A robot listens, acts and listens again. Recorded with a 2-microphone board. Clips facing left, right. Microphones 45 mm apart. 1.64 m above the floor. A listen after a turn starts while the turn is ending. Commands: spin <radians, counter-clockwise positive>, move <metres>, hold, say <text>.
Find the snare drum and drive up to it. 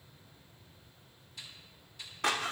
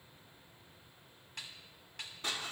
spin -1.57
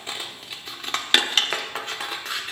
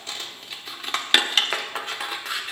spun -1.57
hold
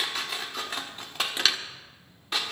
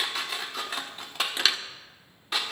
hold
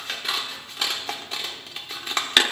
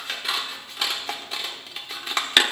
say I heard a snare drum from this way, but can't make it out now. I did not reach it.